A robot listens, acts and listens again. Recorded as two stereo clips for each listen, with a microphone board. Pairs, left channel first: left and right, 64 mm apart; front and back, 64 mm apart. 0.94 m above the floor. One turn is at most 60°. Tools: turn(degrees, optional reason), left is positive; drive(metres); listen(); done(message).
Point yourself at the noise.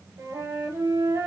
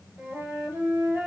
turn(degrees=-60, reason="The flute: 110° right.")
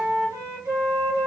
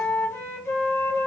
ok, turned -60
turn(degrees=-50, reason="The flute is now 50° right.")
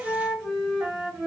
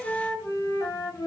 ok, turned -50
done("Found it: a flute, straight ahead.")